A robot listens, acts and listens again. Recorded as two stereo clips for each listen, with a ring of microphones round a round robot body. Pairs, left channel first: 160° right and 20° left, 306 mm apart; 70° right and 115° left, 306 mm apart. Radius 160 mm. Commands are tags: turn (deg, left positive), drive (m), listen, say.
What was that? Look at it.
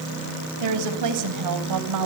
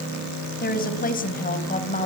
<say>Found it: a woman speaking, straight ahead.</say>